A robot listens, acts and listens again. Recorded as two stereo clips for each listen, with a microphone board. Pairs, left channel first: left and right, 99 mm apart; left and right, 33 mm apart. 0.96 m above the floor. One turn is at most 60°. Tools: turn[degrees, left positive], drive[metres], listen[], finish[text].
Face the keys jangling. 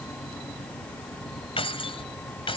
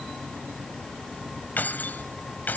Thought: The keys jangling: about 65° left or 115° left.
Action: turn[60]
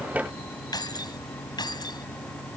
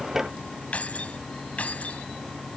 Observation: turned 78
Thought: So it is at 45° left.
Action: turn[45]
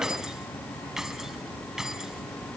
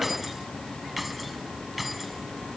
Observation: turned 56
Action: finish[Found it: keys jangling, straight ahead.]